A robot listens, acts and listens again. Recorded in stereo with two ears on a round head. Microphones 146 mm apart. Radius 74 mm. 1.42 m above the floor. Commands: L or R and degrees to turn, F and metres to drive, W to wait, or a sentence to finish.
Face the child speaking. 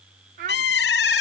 R60
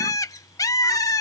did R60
W
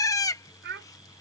R70
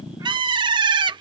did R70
W
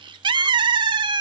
W
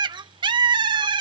R25
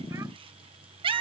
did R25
W
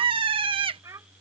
R20
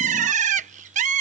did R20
W
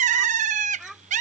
Found it: a child speaking, straight ahead.